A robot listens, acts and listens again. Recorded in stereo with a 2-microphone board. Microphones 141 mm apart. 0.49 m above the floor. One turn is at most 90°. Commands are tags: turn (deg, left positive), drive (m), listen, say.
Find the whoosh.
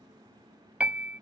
<listen/>
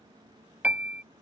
<listen/>
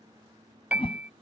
<turn deg="40"/>
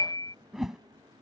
<say>Facing the whoosh.</say>